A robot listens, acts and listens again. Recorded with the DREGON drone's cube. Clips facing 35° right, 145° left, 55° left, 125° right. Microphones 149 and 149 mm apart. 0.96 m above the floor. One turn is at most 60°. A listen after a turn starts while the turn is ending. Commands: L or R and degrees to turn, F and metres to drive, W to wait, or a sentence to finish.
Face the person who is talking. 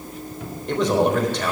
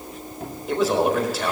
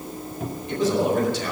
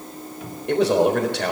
R60
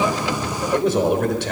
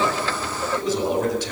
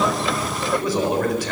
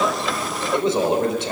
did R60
R60
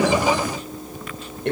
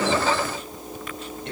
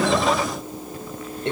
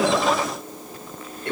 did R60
R10
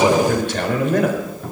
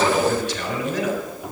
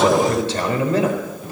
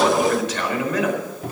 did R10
Facing the man speaking.